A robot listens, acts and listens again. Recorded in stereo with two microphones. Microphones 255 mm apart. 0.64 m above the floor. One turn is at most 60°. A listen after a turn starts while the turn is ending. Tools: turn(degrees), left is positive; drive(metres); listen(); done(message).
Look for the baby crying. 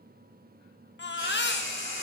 turn(degrees=45)
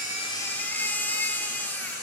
turn(degrees=10)
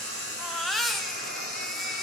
done("Facing the baby crying, 1 to 2 m away.")